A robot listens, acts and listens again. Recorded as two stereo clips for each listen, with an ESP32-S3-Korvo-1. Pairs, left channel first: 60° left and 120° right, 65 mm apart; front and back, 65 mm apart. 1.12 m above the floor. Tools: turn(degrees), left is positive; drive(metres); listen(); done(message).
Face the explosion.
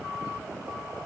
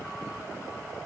listen()
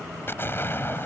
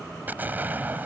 turn(degrees=115)
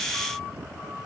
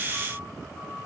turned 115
done("I heard an explosion from this way, but can't make it out now.")